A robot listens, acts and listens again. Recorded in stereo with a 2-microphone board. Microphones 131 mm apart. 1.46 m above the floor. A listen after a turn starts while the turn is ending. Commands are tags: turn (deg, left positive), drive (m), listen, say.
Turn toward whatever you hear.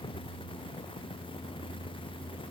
<listen/>
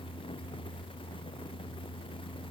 <listen/>
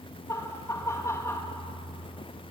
<turn deg="25"/>
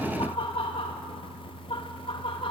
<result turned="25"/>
<turn deg="135"/>
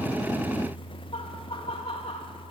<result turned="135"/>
<turn deg="50"/>
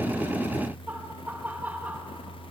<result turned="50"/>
<turn deg="-15"/>
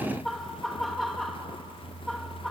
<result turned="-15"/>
<say>Found it: laughter, straight ahead.</say>